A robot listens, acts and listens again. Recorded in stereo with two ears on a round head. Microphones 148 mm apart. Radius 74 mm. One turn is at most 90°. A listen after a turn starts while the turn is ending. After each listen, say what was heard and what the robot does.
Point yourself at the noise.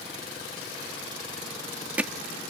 Turn 30° right.
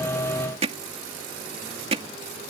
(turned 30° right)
So it is at 140° right. Turn 90° right.
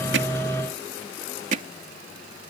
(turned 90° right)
The hammering is now 45° right. Turn 45° right.
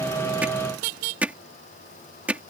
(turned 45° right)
The hammering is now 10° right. Turn 10° right.
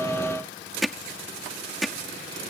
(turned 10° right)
Facing the hammering.